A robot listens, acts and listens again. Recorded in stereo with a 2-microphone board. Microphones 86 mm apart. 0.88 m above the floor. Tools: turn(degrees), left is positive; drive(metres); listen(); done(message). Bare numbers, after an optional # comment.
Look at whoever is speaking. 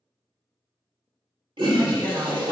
turn(30)
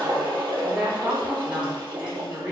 # So it is at 20° right.
turn(-20)
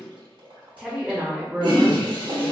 # The woman speaking is now 10° right.
turn(-10)
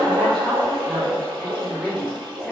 done("Facing the woman speaking.")